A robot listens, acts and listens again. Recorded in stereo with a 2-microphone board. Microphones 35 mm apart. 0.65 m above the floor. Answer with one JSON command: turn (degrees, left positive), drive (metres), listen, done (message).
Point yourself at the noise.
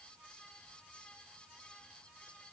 {"listen": true}
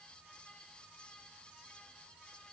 {"listen": true}
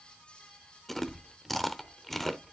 {"turn": 30}
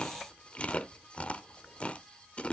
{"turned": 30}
{"turn": 140}
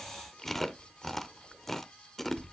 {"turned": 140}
{"done": "Facing the chewing, under 1 m away."}